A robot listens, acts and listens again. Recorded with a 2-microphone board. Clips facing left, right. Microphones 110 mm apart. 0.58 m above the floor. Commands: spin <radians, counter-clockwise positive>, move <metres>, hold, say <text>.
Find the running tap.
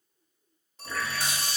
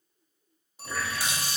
spin -0.52
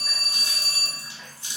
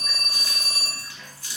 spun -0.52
spin 0.44
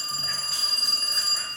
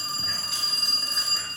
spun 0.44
hold
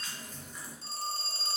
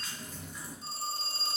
say Facing the running tap, 1 to 2 m away.